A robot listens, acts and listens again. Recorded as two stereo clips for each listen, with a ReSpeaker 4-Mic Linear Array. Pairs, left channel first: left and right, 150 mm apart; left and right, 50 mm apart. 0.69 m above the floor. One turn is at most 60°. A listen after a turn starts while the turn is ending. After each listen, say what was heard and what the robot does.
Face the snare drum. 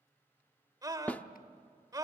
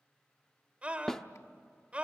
Turn 30° left.
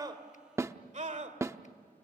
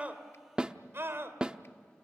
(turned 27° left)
So it is at 20° right. Turn 20° right.
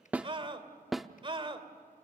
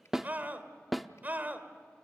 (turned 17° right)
Found it: a snare drum, straight ahead, under 1 m away.